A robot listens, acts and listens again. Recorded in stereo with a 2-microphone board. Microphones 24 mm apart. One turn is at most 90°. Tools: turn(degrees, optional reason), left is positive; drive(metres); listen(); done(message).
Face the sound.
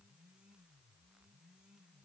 listen()
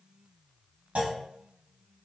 turn(degrees=-65, reason="The clunk: about 65° right or 115° right.")
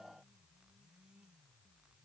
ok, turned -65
listen()
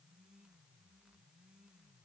done("I heard a clunk, but can't make it out now. It was about straight ahead or 50° right.")